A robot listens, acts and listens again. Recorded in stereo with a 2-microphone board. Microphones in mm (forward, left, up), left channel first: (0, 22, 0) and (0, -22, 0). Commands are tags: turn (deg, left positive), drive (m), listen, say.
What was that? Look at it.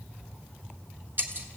<turn deg="-45"/>
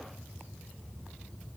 <listen/>
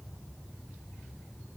<say>I heard breaking glass, but can't make it out now. It was about straight ahead or 90° right.</say>